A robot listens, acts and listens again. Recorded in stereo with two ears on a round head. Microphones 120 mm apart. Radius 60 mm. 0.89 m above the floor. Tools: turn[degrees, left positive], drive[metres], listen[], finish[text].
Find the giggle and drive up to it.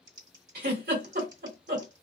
Action: turn[-90]
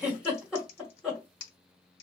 Thought: So it is at 10° right.
Action: turn[-10]
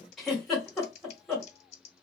Action: drive[1.0]
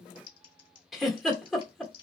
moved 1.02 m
Action: drive[1.0]
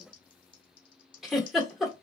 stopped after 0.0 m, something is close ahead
Action: finish[I am next to the giggle.]